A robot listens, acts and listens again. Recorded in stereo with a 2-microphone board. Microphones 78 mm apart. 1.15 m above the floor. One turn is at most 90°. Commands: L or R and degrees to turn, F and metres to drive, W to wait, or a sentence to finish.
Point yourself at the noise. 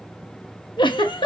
L90
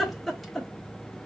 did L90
Facing the giggle, 1 to 2 m away.